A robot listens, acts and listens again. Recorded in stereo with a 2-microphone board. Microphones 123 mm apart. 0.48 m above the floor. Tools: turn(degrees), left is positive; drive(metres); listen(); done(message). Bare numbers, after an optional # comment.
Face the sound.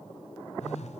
turn(90)
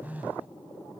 # So it is at 10° right.
turn(-10)
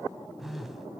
done("Facing the phone buzzing.")